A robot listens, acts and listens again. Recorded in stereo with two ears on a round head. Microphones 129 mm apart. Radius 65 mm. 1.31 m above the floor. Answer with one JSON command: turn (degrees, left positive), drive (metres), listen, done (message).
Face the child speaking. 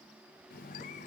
{"listen": true}
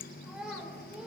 {"turn": -30}
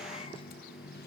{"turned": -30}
{"listen": true}
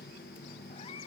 {"listen": true}
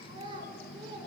{"turn": -145}
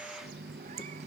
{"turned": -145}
{"listen": true}
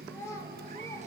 {"turn": 20}
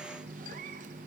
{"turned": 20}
{"listen": true}
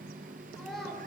{"done": "Facing the child speaking, over 4 m away."}